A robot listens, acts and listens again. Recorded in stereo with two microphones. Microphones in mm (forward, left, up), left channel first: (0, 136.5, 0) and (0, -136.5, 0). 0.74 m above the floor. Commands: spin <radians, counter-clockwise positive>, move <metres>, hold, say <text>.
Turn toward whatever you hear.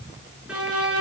spin -0.52
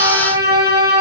spin -2.53
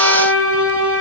say Facing the violin.